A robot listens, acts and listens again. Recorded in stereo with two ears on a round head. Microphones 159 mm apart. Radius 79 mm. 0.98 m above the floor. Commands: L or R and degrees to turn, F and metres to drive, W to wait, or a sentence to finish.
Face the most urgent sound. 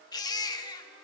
L25
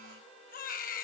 L130
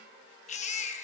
L40
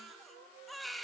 Facing the baby crying.